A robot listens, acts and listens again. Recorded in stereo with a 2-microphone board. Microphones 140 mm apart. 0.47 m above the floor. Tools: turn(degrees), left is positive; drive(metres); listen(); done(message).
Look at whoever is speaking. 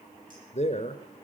turn(degrees=50)
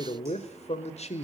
turn(degrees=60)
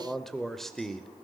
done("Found it: a man speaking, straight ahead, 1 to 2 m away.")